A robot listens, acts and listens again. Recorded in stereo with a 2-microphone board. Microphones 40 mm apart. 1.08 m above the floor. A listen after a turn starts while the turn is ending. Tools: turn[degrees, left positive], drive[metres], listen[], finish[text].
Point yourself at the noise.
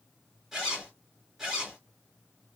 Action: turn[-30]
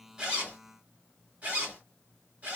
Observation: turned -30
Thought: So it is at 140° right.
Action: turn[-140]
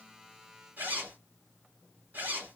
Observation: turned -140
Thought: The zipper is now 50° right.
Action: turn[-50]
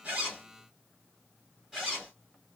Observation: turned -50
Thought: The zipper is now 10° right.
Action: turn[-10]
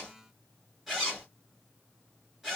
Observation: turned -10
Action: finish[Found it: a zipper, straight ahead.]